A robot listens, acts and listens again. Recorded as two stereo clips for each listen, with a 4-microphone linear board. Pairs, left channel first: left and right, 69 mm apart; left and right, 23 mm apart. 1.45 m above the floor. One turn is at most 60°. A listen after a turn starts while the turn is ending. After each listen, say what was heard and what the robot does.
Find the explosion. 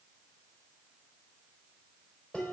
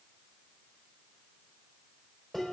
Keep listening.
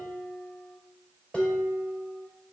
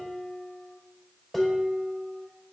Keep listening.
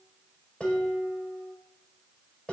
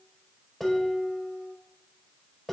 I can't make out an explosion to turn to.